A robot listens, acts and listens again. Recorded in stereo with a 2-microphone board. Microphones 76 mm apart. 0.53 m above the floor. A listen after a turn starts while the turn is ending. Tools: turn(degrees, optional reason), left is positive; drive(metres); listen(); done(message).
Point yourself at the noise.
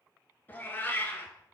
turn(degrees=30, reason="The cat meowing: about 30° left or 150° left.")
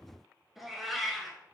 done("Facing the cat meowing.")